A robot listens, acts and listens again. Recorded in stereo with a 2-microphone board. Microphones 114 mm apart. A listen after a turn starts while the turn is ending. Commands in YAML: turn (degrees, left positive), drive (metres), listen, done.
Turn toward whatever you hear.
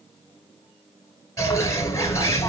turn: 25
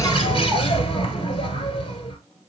turn: 130
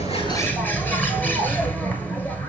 turn: 15
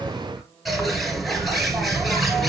done: "Found it: a bird, straight ahead, 1 to 2 m away."